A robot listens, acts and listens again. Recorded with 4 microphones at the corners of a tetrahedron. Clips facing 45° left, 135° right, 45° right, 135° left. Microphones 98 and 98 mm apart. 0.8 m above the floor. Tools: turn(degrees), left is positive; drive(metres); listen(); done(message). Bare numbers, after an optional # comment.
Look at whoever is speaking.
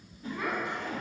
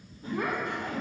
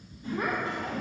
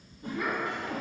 # The child speaking: 100° right.
turn(-100)
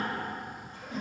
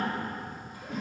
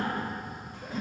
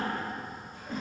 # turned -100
listen()
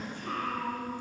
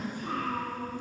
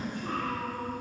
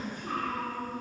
# The child speaking is now 60° right.
turn(-60)
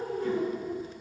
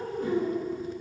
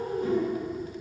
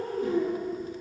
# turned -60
done("Found it: a child speaking, straight ahead.")